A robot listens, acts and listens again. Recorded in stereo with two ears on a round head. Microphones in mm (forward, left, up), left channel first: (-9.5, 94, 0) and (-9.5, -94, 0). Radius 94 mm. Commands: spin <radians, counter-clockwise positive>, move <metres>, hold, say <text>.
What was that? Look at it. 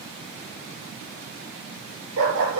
spin -1.57
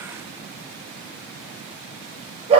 spin -0.52
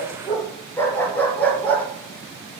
say Facing the dog barking.